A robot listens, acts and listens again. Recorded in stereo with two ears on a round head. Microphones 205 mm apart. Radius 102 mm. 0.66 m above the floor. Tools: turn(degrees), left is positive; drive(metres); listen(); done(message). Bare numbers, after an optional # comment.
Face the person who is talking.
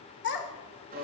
# The child speaking: about 50° left or 130° left.
turn(50)
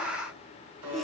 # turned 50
listen()
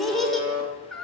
done("Found it: a child speaking, straight ahead.")